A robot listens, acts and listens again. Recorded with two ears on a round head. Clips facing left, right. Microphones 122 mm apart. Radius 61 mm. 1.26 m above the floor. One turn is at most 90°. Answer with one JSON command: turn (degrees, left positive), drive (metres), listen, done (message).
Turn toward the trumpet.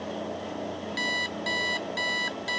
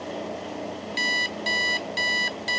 {"listen": true}
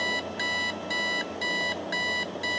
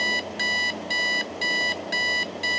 {"listen": true}
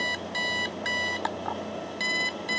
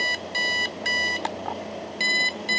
{"done": "I can't make out a trumpet, only an alarm clock."}